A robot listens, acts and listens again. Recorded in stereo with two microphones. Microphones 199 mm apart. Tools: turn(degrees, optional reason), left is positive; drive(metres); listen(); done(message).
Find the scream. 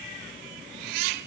listen()
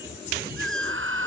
turn(degrees=-90)
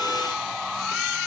done("Found it: a scream, straight ahead.")